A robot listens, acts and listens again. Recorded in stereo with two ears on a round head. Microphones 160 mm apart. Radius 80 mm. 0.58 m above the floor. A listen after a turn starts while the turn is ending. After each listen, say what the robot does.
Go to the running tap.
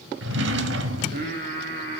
Keep listening.
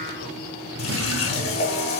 Turn 35° left.
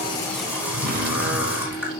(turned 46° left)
Turn 10° right.
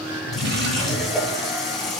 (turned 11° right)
Drive 1.0 m forward.
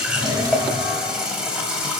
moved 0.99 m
Drive 1.0 m forward.
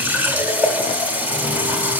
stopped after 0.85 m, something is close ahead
Turn 10° right.
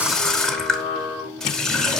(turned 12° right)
I am next to the running tap.